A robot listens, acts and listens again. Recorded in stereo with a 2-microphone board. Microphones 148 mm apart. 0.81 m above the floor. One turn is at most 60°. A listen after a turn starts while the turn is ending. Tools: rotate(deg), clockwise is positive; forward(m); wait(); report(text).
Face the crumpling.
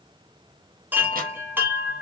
wait()
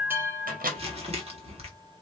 rotate(45)
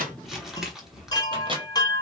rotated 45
report("Facing the crumpling.")